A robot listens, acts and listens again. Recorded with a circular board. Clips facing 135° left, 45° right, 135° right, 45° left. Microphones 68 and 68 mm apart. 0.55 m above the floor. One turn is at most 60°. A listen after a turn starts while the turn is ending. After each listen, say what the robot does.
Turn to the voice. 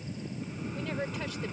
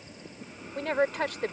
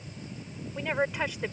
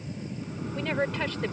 Turn 60° right.
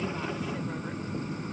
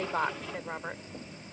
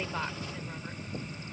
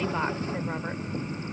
Keep listening.
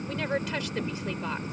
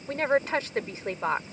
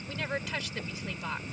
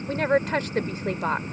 Found it: a woman speaking, straight ahead.